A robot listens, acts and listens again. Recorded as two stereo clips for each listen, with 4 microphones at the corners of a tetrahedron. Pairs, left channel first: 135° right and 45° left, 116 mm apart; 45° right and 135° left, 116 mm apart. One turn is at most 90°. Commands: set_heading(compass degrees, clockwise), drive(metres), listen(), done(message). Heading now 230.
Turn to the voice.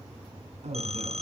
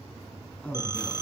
set_heading(200)
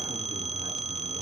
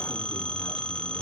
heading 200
listen()
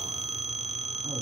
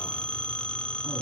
listen()
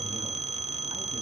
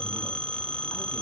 done("I heard a man speaking from this way, but can't make it out now.")